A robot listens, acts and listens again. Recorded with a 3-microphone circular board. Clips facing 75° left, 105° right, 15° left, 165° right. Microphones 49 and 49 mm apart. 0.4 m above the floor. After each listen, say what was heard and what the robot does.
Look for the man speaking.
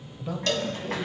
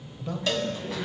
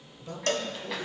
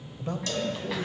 The man speaking: 155° left. Turn 155° left.
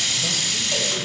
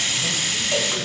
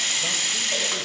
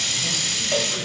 Keep listening.
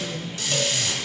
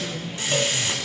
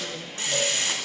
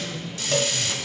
The man speaking is now 10° left. Turn 10° left.
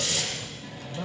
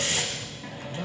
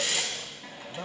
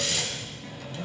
Facing the man speaking.